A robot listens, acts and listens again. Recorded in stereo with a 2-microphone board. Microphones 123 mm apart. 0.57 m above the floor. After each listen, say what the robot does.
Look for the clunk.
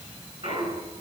Turn 50° right.
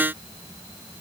Keep listening.
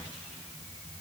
I heard a clunk, but can't make it out now. It was about straight ahead or 80° right.